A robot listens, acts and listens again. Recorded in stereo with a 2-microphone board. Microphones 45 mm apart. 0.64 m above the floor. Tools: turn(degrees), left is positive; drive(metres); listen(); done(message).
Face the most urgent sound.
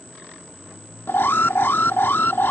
turn(degrees=55)
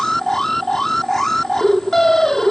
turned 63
turn(degrees=10)
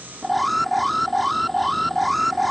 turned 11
done("Facing the alarm.")